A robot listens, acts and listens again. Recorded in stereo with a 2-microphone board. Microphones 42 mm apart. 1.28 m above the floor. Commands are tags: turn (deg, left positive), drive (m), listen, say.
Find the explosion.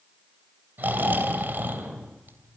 <turn deg="-30"/>
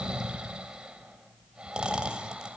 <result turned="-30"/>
<listen/>
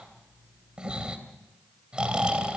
<say>I heard an explosion, but can't make it out now. It was about 20° left or 140° right.</say>